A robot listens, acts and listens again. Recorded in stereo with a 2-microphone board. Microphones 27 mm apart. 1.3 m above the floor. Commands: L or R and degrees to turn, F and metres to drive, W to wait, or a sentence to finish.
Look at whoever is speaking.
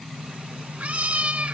W
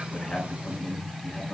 L50
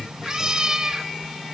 L80
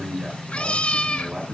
R10
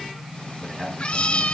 Facing the man speaking.